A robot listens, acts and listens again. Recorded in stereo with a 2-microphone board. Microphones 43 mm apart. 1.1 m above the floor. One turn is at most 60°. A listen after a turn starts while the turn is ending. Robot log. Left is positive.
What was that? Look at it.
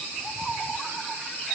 cmd idle
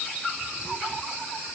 cmd idle
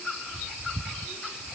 end: I can't make out anything to turn to.